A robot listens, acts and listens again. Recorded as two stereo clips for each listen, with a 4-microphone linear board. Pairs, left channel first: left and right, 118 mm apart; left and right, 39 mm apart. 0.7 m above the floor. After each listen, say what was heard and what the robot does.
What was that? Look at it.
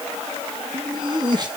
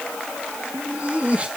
The laughter: about 35° right or 145° right. Turn 35° right.
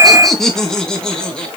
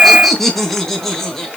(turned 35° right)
So it is at 10° left. Turn 10° left.
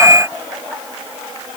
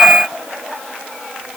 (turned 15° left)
Keep listening.
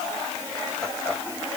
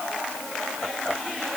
Facing the laughter, over 4 m away.